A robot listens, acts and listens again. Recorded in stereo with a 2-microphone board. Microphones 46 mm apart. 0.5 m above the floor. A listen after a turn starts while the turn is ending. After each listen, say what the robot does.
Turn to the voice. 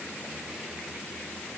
Keep listening.
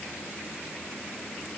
Keep listening.
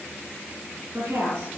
Turn 90° right.
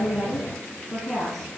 Found it: a woman speaking, straight ahead, over 4 m away.